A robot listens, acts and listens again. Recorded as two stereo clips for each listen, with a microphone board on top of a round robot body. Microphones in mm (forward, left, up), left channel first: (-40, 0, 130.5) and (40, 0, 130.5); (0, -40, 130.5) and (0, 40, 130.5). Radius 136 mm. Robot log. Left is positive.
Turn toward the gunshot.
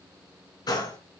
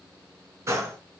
note: The gunshot: 145° left.
cmd yaw +145
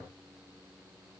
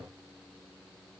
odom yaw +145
end: I heard a gunshot from this way, but can't make it out now.